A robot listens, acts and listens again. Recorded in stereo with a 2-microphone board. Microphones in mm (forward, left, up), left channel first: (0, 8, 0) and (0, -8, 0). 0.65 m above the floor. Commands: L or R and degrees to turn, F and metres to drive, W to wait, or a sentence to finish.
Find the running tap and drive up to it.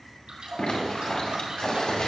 R90
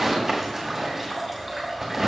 R10
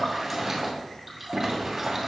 F1.0
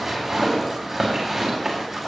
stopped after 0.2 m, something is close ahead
W
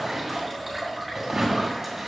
Something is in my way. I am facing the running tap but have not reached it.